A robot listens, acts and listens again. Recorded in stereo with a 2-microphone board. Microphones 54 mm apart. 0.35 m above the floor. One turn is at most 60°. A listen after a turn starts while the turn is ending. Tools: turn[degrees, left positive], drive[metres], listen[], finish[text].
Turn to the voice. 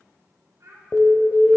Thought: The child speaking: about 65° right or 115° right.
Action: turn[-60]
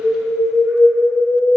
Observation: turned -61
Action: listen[]
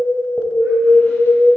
Action: listen[]
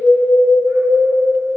Action: finish[I heard a child speaking, but can't make it out now. It was about straight ahead or 55° right.]